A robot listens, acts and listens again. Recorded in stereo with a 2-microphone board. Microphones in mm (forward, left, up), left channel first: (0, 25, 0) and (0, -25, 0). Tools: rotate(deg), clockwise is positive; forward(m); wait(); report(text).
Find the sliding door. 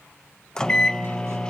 wait()
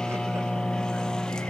wait()
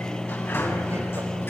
rotate(-50)
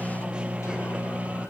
wait()
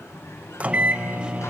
rotate(-80)
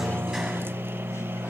wait()
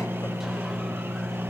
wait()
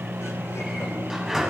rotate(10)
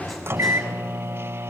report("Found it: a sliding door, straight ahead.")